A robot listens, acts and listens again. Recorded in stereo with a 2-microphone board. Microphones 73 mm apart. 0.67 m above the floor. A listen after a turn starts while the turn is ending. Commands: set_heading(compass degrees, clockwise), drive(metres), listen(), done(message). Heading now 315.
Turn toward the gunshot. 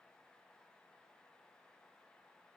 listen()
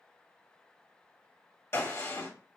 set_heading(275)
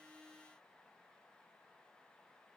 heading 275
listen()
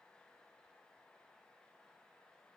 done("I heard a gunshot, but can't make it out now. It was about straight ahead or 100° left.")